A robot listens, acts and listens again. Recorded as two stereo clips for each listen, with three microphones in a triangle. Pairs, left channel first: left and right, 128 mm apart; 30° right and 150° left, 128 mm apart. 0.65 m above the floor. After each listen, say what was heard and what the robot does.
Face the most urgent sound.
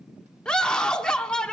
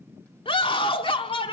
Found it: a scream, straight ahead.